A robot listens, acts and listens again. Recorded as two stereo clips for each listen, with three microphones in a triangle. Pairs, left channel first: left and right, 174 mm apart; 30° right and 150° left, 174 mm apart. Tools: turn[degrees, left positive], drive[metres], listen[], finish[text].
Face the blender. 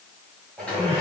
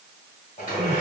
Action: finish[Found it: a blender, straight ahead.]